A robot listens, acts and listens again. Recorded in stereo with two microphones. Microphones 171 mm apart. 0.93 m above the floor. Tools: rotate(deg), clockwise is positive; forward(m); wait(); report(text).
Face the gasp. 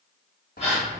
rotate(-35)
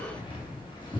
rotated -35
wait()
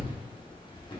report("I heard a gasp, but can't make it out now. It was about straight ahead or 110° left.")